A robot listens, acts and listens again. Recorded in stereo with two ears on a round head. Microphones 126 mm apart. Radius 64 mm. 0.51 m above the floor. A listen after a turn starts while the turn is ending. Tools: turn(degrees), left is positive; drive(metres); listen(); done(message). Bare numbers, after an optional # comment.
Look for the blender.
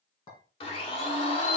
# The blender: about 40° left or 140° left.
turn(40)
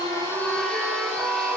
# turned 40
done("Found it: a blender, straight ahead.")